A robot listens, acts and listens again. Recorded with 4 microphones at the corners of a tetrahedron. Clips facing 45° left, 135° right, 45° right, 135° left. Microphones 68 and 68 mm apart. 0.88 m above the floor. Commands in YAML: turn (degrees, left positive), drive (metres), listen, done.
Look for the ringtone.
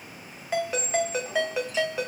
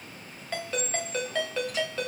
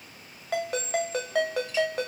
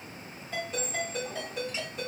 turn: -30
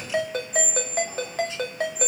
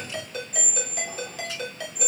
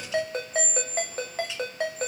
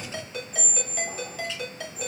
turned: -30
done: "Facing the ringtone, 1 to 2 m away."